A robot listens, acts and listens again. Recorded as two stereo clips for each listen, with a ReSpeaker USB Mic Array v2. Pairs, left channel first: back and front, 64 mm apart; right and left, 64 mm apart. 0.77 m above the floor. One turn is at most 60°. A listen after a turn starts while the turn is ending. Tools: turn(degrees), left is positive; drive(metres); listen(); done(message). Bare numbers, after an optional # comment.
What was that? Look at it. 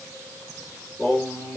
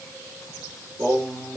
# The singing: 120° left.
turn(60)
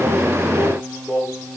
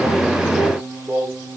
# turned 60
# The singing is now 75° left.
turn(60)
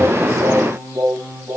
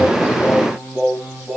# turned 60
# The singing is now 20° left.
turn(20)
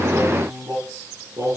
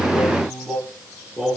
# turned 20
done("Facing the singing, 2 to 4 m away.")